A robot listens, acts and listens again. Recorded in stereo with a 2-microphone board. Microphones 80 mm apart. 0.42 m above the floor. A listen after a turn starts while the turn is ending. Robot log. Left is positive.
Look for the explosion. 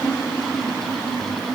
cmd idle
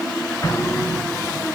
note: The explosion: about 35° left or 145° left.
cmd yaw +35
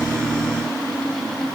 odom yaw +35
cmd idle
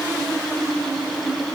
end: I heard an explosion, but can't make it out now. It was about straight ahead or 110° left.